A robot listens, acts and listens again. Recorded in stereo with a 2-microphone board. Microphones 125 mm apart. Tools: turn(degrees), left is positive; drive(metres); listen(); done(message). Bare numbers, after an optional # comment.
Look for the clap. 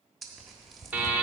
listen()
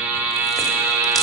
listen()
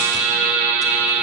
done("I can't make out a clap, only a buzzer and tearing paper.")